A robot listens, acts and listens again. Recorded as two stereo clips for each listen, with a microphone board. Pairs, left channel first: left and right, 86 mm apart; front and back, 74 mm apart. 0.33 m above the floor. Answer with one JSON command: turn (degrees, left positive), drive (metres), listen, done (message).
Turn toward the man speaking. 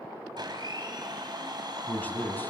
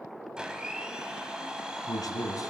{"turn": 25}
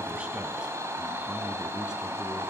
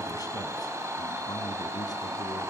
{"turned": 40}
{"turn": -10}
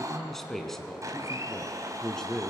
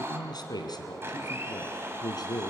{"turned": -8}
{"done": "Found it: a man speaking, straight ahead, 2 to 4 m away."}